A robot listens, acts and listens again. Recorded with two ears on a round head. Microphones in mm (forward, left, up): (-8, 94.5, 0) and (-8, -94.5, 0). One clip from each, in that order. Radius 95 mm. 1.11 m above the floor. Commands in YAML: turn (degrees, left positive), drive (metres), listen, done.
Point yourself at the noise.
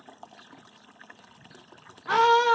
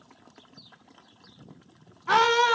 turn: -30
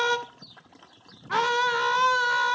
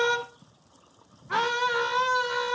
turn: 15
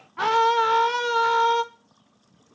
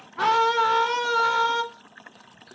done: "Found it: a scream, straight ahead, under 1 m away."